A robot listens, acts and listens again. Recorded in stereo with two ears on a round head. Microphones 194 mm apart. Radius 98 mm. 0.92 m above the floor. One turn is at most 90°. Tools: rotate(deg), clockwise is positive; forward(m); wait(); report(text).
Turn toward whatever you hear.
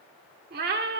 rotate(45)
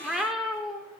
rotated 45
report("Facing the cat meowing, 1 to 2 m away.")